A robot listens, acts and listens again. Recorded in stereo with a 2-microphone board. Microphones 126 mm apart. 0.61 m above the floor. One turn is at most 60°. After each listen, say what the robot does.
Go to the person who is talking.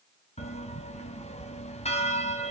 Keep listening.
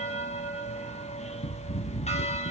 Keep listening.
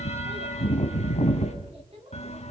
Turn 50° right.
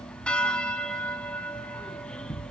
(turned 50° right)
Keep listening.
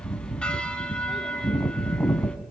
Keep listening.
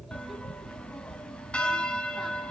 I heard a child speaking, but can't make it out now. It was about straight ahead or 80° right. I did not reach it.